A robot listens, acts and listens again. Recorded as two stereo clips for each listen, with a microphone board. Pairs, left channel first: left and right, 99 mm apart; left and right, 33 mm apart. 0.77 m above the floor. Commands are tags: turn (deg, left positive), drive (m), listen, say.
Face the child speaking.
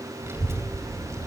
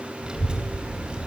<turn deg="-30"/>
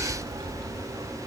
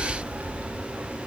<turn deg="-115"/>
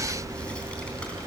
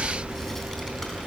<turn deg="10"/>
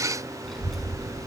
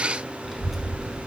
<say>Facing the child speaking, over 4 m away.</say>